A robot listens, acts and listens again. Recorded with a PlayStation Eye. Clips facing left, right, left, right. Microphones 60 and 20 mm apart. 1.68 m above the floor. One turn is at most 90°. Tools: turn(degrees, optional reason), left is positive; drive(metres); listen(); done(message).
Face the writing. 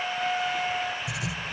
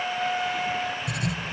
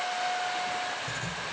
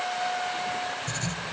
turn(degrees=-60, reason="The writing: about 60° right or 120° right.")
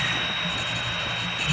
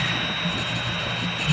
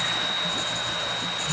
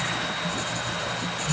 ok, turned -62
done("Found it: writing, straight ahead.")